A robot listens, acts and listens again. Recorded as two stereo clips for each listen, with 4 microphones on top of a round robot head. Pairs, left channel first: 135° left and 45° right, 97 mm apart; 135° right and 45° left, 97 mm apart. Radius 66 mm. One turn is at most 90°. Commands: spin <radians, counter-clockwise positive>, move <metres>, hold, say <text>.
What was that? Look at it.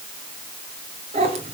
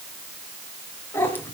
spin -1.13
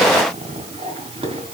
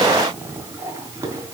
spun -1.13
spin -0.26
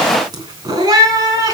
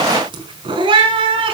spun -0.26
spin 0.17
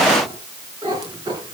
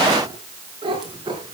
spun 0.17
say Facing the cat meowing.